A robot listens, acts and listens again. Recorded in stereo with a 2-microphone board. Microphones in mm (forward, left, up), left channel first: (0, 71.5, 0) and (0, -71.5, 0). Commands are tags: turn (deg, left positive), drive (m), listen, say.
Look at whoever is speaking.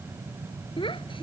<turn deg="35"/>
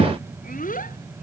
<turn deg="105"/>
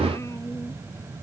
<listen/>
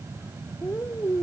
<turn deg="20"/>
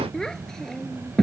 <say>Facing the child speaking.</say>